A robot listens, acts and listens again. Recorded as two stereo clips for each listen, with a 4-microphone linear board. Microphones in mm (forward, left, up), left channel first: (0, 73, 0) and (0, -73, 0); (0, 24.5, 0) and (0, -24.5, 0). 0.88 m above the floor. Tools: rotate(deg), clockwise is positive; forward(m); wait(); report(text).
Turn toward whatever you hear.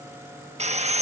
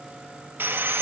rotate(50)
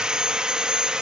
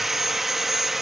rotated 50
report("Facing the sawing.")